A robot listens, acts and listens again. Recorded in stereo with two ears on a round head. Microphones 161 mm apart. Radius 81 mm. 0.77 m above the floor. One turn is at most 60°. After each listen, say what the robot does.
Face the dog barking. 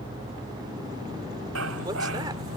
Turn 60° right.
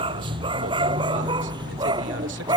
Turn 25° right.
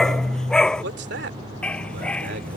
Found it: a dog barking, straight ahead.